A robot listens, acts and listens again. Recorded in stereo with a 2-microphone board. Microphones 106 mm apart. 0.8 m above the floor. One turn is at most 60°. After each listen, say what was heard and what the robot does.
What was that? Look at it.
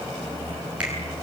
Turn 30° right.
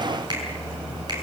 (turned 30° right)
So it is at 140° right. Turn 60° right.
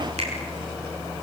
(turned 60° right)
The finger snap is now 75° right. Turn 60° right.
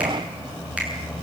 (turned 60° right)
Nothing new. It was at 15° right. Turn 15° right.
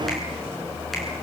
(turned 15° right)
Keep listening.
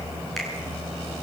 Found it: a finger snap, straight ahead.